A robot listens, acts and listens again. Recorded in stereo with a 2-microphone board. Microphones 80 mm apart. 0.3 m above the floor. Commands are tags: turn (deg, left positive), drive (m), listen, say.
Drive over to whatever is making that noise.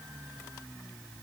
<listen/>
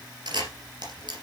<turn deg="-65"/>
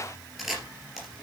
<drive m="1.0"/>
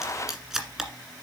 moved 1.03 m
<drive m="1.0"/>
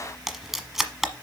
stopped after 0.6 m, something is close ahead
<say>I am next to the camera shutter.</say>